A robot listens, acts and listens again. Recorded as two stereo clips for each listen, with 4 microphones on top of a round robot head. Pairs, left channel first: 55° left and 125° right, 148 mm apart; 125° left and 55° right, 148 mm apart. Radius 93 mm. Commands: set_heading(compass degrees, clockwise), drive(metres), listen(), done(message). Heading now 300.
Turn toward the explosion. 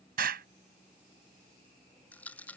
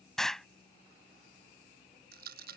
set_heading(85)
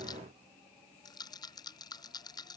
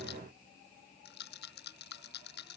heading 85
done("I heard an explosion from this way, but can't make it out now.")